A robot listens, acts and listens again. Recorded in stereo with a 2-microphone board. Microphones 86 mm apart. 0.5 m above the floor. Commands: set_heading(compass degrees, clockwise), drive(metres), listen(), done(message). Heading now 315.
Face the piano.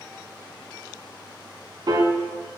set_heading(15)
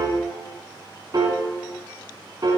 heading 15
set_heading(70)
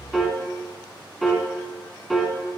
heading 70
done("Facing the piano, under 1 m away.")